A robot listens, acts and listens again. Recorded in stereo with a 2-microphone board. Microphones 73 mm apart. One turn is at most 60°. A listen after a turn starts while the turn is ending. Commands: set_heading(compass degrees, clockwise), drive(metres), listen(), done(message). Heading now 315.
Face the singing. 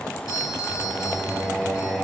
set_heading(340)
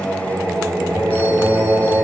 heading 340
set_heading(20)
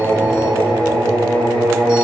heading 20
set_heading(80)
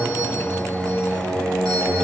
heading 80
set_heading(115)
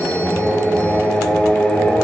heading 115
done("Found it: singing, straight ahead.")